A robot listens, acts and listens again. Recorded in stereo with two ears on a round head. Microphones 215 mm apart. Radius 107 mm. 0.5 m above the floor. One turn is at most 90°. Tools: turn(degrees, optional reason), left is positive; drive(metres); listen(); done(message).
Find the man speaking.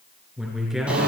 turn(degrees=30)
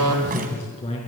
turn(degrees=90, reason="So it is at 150° left.")
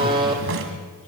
turn(degrees=65, reason="The man speaking is now 65° left.")
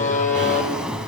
listen()
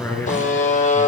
turn(degrees=10, reason="The man speaking is now 10° left.")
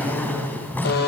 done("Facing the man speaking.")